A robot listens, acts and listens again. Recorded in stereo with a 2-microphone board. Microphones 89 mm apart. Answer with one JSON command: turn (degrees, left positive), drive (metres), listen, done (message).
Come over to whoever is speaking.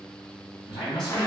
{"turn": 65}
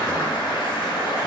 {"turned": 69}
{"listen": true}
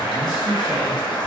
{"drive": 1.0}
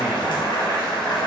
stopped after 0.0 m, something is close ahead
{"listen": true}
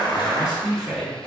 {"done": "Blocked. The man speaking is further on, straight ahead."}